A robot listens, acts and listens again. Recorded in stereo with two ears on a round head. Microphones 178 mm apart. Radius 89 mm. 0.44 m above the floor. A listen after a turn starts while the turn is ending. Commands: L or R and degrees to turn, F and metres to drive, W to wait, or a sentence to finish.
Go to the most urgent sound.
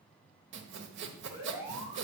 R30
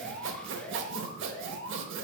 L15
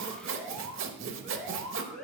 F1.0
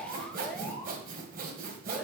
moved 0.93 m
F1.0
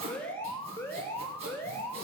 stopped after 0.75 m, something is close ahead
L15
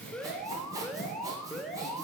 I am next to the alarm.